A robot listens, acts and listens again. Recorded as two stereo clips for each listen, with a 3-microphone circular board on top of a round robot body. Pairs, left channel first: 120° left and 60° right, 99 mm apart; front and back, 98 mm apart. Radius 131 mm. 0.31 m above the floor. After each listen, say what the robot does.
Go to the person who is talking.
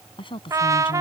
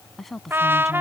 Turn 90° left.
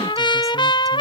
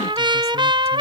Keep listening.
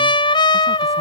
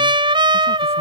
Keep listening.
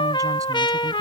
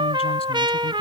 I heard a woman speaking from this way, but can't make it out now. I did not reach it.